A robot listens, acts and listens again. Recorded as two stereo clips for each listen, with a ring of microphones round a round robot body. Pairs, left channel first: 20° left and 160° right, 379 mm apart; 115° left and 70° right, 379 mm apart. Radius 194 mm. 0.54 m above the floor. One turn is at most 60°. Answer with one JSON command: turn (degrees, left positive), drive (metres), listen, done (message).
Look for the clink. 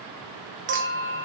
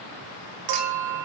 {"turn": -60}
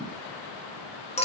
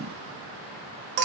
{"turn": -50}
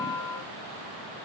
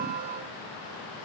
{"turn": -20}
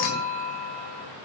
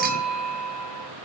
{"done": "Facing the clink, 2 to 4 m away."}